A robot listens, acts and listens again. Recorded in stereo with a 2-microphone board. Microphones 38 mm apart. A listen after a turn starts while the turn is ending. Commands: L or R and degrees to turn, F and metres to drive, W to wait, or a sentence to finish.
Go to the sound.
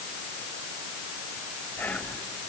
L55
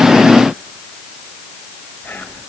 L70
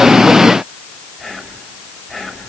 F1.0
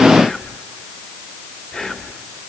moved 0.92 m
L15
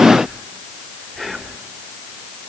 F1.0
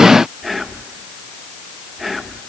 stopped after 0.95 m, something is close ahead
Arrived at the whispering, straight ahead.